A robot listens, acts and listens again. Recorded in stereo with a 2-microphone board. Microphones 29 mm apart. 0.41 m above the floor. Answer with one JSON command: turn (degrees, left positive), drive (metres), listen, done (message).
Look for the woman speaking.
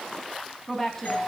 {"turn": 30}
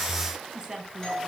{"turn": -25}
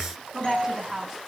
{"turn": -10}
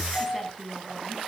{"done": "Facing the woman speaking."}